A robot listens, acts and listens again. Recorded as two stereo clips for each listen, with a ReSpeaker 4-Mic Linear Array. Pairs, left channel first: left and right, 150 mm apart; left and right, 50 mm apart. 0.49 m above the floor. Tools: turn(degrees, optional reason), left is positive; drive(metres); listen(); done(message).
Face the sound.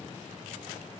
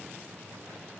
listen()
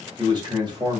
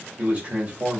turn(degrees=-30, reason="The man speaking: about 30° right or 150° right.")
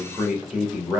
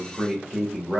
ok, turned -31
turn(degrees=-10, reason="So it is at 10° right.")
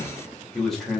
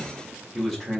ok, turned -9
done("Found it: a man speaking, straight ahead.")